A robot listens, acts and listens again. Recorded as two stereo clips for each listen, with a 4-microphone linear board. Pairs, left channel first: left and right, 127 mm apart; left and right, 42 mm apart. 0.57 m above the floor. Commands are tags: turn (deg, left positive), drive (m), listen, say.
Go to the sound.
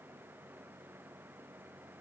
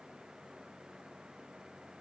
<listen/>
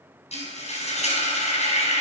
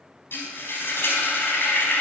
<turn deg="60"/>
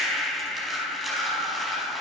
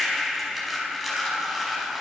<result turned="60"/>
<drive m="1.0"/>
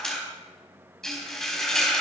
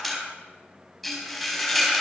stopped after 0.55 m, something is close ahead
<say>Something is in my way. I am facing the frying but have not reached it.</say>